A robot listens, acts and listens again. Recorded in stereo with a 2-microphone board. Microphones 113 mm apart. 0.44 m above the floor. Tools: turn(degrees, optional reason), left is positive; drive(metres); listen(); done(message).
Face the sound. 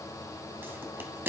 turn(degrees=-20, reason="The pop: about 20° right or 160° right.")
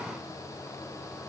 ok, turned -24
listen()
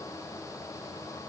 done("I heard a pop, but can't make it out now. It was about 5° left or 135° right.")